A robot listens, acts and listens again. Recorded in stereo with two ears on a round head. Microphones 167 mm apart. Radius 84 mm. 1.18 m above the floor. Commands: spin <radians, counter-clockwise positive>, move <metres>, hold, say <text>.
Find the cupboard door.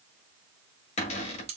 spin 0.61
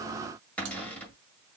spin 0.17
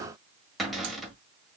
say Found it: a cupboard door, straight ahead, 1 to 2 m away.